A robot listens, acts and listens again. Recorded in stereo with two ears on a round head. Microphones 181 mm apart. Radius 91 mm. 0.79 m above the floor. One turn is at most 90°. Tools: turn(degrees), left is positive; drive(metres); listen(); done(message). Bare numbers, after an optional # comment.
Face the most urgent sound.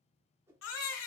# The baby crying: about 75° left or 105° left.
turn(75)
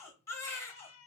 # So it is at 15° left.
turn(15)
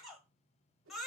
done("Facing the baby crying, 1 to 2 m away.")